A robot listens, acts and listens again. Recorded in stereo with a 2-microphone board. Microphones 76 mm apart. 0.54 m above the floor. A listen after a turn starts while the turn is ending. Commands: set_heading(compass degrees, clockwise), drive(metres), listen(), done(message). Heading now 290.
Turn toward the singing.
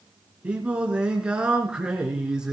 set_heading(320)
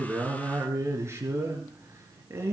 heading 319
set_heading(104)
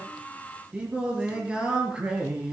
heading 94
set_heading(109)
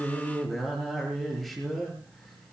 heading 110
done("Found it: singing, straight ahead.")